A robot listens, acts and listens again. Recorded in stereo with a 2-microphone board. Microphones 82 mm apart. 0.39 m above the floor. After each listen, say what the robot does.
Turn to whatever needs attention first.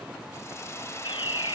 Turn 90° left.
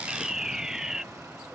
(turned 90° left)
Turn 10° right.
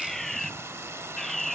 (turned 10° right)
Found it: a fire alarm, straight ahead.